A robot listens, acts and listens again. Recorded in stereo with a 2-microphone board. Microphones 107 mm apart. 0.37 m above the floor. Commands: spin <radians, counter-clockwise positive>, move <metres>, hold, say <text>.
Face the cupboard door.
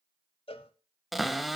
spin 0.52
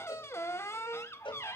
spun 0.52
spin 2.71
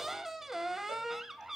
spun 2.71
say Found it: a cupboard door, straight ahead.